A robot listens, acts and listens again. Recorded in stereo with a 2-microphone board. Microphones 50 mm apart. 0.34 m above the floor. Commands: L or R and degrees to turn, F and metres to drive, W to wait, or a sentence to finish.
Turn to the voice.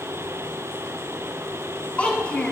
L25
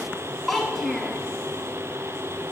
Facing the child speaking.